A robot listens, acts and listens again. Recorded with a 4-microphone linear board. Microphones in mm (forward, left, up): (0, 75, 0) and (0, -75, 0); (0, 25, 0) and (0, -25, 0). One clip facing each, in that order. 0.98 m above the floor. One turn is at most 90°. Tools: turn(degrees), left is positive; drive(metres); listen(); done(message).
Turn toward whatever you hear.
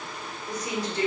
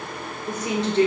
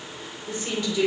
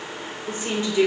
turn(degrees=-25)
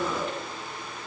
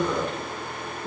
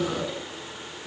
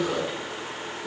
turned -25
turn(degrees=-90)
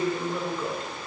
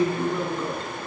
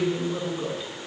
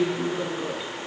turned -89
turn(degrees=-30)
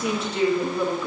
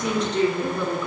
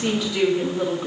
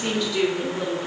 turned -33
turn(degrees=10)
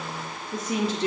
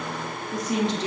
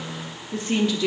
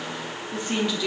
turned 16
done("Found it: a woman speaking, straight ahead.")